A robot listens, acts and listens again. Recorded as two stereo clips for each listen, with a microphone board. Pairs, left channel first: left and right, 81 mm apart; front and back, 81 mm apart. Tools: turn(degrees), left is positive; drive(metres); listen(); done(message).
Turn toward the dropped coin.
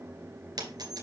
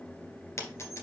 turn(degrees=-55)
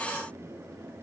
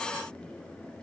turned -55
done("Facing where the dropped coin came from. I can't hear it now.")